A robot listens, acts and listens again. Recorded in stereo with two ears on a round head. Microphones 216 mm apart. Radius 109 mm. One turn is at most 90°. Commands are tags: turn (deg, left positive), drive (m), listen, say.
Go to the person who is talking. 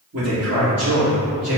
<turn deg="-45"/>
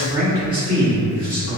<drive m="1.0"/>
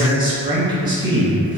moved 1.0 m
<turn deg="-20"/>
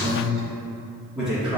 <drive m="1.0"/>
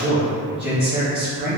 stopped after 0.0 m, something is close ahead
<turn deg="-10"/>
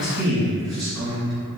<say>I am next to the man speaking.</say>